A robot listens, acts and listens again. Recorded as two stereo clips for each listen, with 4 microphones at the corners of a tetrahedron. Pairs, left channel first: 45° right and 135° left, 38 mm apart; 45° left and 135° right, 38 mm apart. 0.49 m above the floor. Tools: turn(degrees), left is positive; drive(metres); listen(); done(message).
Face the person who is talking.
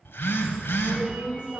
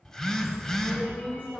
turn(degrees=80)
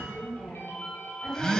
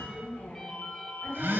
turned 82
done("Found it: a woman speaking, straight ahead.")